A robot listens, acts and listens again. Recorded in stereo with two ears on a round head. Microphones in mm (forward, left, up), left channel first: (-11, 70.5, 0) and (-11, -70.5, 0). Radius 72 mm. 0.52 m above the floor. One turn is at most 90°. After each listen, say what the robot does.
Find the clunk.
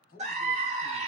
Keep listening.
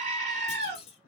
Turn 40° left.
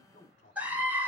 Keep listening.
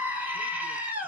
I heard a clunk, but can't make it out now. It was about straight ahead or 100° left.